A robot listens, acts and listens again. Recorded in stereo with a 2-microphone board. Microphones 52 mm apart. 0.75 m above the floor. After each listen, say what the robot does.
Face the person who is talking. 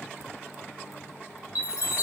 Keep listening.
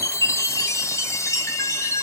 Keep listening.
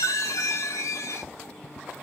I can't make out anyone speaking to turn to.